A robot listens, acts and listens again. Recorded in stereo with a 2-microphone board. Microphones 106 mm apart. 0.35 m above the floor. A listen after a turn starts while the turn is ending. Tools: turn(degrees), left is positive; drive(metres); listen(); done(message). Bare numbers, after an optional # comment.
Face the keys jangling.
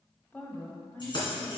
# The keys jangling: about 50° left or 130° left.
turn(50)
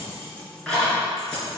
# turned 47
done("Facing the keys jangling, 2 to 4 m away.")